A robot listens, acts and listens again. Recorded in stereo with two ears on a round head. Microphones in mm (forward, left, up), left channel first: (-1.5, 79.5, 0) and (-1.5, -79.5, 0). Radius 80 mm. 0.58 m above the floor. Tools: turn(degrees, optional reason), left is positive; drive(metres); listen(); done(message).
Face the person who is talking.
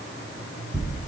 listen()
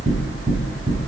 listen()
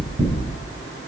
done("I can't make out anyone speaking to turn to.")